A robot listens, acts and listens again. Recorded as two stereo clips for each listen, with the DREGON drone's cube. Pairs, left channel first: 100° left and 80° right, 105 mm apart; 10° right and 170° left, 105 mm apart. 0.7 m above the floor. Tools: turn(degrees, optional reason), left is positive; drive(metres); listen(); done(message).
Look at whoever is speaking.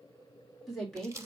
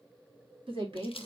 turn(degrees=180, reason="The woman speaking: straight behind.")
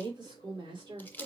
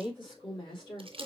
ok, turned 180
turn(degrees=-50, reason="The woman speaking is now 50° right.")
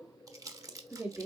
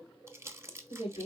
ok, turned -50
done("Found it: a woman speaking, straight ahead, 2 to 4 m away.")